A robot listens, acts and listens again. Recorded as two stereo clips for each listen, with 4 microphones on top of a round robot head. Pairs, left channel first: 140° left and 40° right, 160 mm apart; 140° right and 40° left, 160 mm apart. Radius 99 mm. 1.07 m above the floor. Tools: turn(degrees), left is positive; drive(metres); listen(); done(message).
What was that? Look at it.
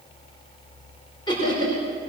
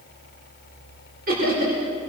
turn(degrees=75)
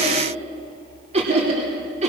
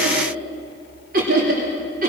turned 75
done("Found it: laughter, straight ahead, 2 to 4 m away.")